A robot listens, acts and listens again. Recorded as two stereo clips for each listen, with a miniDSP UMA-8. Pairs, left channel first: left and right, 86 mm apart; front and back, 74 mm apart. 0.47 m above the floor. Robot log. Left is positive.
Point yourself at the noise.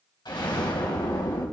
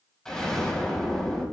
note: The explosion: 80° left.
cmd yaw +80
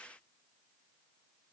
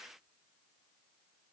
end: Facing where the explosion came from. I can't hear it now.